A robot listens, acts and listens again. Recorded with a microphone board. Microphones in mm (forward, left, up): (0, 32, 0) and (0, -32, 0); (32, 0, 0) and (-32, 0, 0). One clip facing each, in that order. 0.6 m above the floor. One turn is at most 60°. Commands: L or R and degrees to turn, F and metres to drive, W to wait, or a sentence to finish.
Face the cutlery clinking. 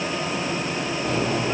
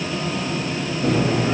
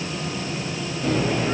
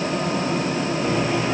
R60
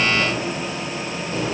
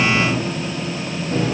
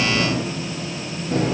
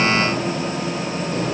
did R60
R40
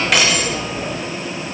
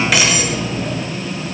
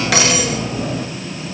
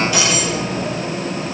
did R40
Facing the cutlery clinking.